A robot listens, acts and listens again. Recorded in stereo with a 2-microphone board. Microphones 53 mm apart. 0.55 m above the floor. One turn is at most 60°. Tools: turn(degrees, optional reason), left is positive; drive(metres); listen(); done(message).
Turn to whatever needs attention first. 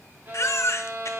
turn(degrees=55, reason="The baby crying: about 55° left or 125° left.")
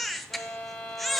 done("Facing the baby crying, under 1 m away.")